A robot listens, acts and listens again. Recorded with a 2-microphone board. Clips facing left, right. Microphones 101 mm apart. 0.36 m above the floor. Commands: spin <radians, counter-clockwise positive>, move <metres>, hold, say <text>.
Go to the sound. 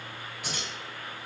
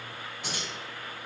spin -0.44
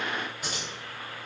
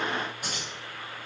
spin -2.18
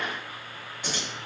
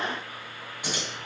spin -0.17
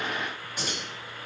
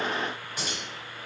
move 1.0
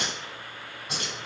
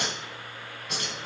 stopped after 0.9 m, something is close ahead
say Arrived at the keys jangling, straight ahead.